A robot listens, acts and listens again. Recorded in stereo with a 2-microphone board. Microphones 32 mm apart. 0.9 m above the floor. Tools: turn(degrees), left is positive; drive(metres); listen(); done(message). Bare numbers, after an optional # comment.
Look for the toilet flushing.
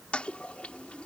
# The toilet flushing: about 40° left or 140° left.
turn(40)
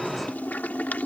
# So it is at 100° left.
turn(100)
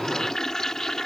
# The toilet flushing is now 20° left.
turn(20)
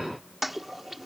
done("Facing the toilet flushing.")